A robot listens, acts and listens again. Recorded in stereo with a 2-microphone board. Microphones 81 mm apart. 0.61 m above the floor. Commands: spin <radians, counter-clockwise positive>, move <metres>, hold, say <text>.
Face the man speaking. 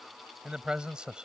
spin -0.52
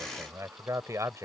spin -2.44
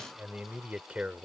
spin -0.26
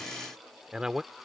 spin -0.17
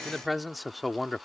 say Found it: a man speaking, straight ahead.